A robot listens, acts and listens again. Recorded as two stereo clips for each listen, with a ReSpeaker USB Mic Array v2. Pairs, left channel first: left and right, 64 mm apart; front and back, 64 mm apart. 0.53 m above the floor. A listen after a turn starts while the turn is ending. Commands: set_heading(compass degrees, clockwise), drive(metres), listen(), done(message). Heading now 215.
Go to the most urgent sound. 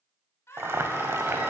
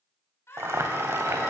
set_heading(170)
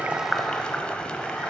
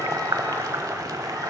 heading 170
listen()
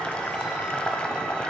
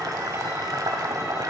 listen()
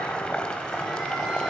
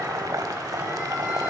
done("Facing where the scream came from. I can't hear it now. I did not reach it.")